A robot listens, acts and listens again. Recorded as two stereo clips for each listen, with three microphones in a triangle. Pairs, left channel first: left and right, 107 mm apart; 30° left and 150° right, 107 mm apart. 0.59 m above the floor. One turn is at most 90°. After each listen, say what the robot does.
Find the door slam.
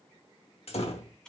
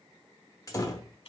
Turn 85° left.
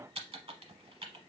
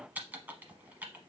I heard a door slam from this way, but can't make it out now.